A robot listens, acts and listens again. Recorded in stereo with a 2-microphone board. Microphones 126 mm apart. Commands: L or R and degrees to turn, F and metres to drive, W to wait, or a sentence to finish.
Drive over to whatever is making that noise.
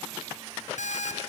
L75
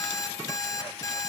L25
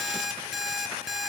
F1.0
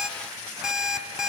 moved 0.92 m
F1.0
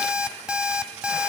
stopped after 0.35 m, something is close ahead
R10
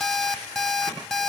I am next to the alarm clock.